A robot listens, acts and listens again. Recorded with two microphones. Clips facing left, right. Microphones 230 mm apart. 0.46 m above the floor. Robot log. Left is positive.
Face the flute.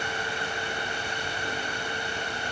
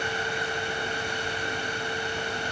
cmd idle
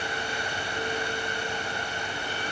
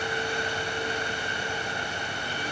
cmd idle
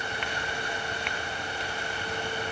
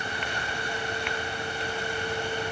end: I can't make out a flute.